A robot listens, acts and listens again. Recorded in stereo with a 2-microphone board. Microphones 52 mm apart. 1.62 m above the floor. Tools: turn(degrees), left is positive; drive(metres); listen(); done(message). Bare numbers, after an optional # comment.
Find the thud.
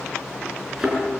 turn(-30)
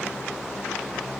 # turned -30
listen()
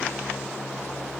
done("I heard a thud, but can't make it out now. It was about 20° left or 140° right.")